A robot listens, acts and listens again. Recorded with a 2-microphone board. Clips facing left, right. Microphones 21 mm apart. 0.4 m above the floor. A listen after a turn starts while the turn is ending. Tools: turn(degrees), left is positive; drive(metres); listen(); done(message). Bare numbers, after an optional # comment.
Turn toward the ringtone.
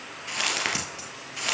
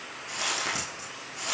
listen()
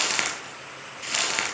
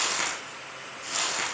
listen()
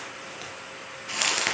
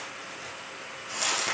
done("I can't make out a ringtone to turn to.")